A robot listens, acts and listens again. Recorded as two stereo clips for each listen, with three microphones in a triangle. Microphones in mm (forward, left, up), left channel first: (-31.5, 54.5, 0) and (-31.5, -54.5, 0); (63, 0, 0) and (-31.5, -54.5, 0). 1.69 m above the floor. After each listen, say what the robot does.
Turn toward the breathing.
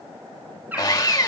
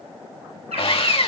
Keep listening.
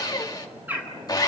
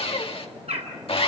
Keep listening.
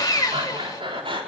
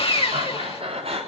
Turn 130° right.
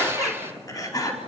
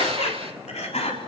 Turn 35° left.
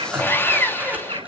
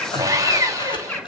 Turn 15° right.
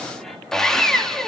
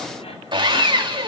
Keep listening.
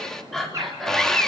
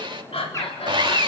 Found it: breathing, straight ahead.